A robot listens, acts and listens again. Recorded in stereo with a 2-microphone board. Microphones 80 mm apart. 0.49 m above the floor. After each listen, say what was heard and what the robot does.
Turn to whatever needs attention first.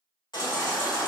The baby crying: about 75° left or 105° left. Turn 75° left.
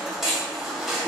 Found it: a baby crying, straight ahead, under 1 m away.